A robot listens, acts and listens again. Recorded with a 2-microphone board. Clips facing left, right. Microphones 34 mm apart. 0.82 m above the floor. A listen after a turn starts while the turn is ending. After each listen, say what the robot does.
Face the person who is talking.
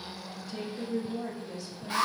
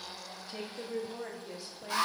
Turn 20° right.
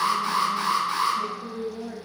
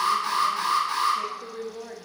Turn 135° right.
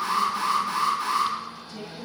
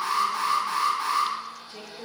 Turn 35° right.
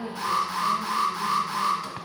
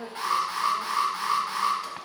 Keep listening.
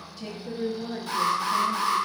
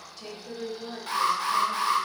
Found it: a woman speaking, straight ahead.